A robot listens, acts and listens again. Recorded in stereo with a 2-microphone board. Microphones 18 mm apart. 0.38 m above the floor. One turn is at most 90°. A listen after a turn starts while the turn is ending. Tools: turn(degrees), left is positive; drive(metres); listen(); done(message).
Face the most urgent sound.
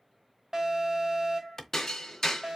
turn(degrees=-30)
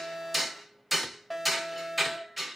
done("Facing the alarm, 2 to 4 m away.")